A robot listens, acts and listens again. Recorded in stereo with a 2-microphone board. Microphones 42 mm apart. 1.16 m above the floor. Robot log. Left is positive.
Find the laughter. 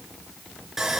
cmd idle
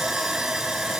cmd idle
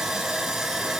end: I can't make out laughter, only sawing.